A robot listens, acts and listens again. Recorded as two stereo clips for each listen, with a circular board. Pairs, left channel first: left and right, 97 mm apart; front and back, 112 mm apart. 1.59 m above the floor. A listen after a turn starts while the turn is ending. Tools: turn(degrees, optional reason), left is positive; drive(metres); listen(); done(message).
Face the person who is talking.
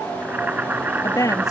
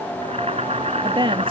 turn(degrees=140, reason="The woman speaking: 140° left.")
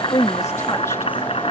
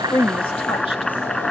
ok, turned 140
listen()
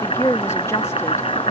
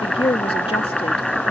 turn(degrees=30, reason="The woman speaking is now 30° left.")
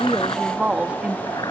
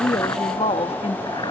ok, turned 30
turn(degrees=-10, reason="The woman speaking is now 10° right.")
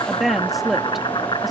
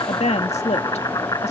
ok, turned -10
done("Facing the woman speaking.")